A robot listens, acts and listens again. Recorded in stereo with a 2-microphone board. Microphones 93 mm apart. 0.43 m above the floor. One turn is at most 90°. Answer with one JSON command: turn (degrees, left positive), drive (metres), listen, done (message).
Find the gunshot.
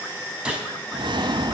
{"turn": -30}
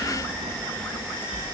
{"listen": true}
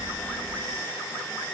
{"done": "I heard a gunshot, but can't make it out now. It was about 20° left or 140° right."}